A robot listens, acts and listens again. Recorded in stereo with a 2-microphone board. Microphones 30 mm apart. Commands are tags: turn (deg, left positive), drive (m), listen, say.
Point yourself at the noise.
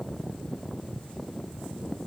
<listen/>
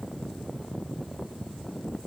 <listen/>
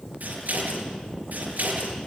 <turn deg="-65"/>
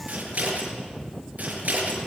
<turn deg="-50"/>
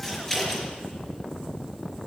<turn deg="15"/>
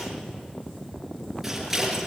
<turn deg="-10"/>
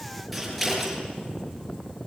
<say>Facing the scissors.</say>